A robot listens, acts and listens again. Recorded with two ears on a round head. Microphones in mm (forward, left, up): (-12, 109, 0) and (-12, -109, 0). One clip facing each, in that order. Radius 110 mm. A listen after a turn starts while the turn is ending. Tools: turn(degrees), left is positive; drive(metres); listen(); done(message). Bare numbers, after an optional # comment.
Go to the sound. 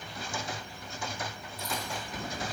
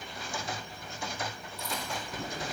# The chewing: about 30° right or 150° right.
turn(-30)
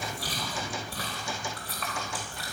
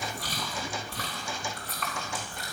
drive(1.0)
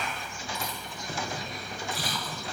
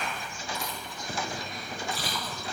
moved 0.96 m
drive(1.0)
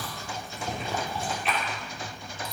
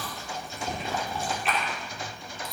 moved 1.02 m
drive(1.0)
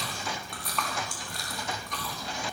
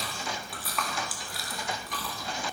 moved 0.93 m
drive(1.0)
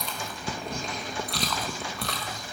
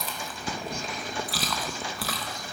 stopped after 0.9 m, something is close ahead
done("I am next to the chewing.")